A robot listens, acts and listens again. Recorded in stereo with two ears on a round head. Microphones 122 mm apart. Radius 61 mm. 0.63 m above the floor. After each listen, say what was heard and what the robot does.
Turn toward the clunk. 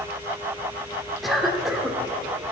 Keep listening.
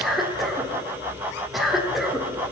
Keep listening.
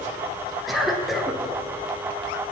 I can't make out a clunk to turn to.